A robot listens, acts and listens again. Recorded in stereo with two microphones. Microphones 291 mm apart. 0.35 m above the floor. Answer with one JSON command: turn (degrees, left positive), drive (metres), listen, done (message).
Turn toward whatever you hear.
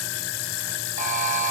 {"turn": -25}
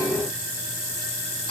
{"listen": true}
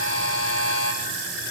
{"turn": -130}
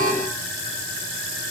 {"listen": true}
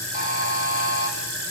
{"turn": -30}
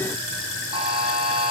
{"turn": -20}
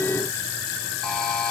{"done": "Facing the buzzer, over 4 m away."}